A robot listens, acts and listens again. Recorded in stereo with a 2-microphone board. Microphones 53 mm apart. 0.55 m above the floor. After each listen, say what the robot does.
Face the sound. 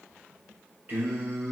Turn 25° right.
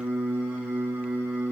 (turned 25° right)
Turn 20° right.
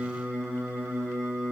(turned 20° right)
Turn 30° right.
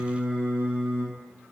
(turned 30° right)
Turn 25° right.
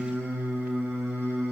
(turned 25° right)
Turn 135° right.
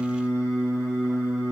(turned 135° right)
Turn 25° right.
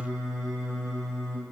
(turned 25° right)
Turn 10° right.
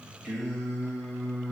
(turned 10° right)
Facing the singing.